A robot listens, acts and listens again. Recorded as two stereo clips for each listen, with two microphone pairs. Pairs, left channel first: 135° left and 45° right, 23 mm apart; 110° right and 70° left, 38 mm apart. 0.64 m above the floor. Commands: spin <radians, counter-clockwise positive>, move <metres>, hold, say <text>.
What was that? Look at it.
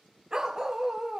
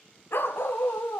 spin -2.01
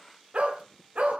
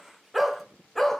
spin -0.44
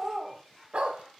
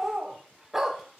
spin -0.17
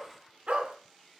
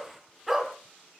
spin -0.26
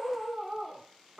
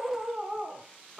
say Facing the dog barking, 2 to 4 m away.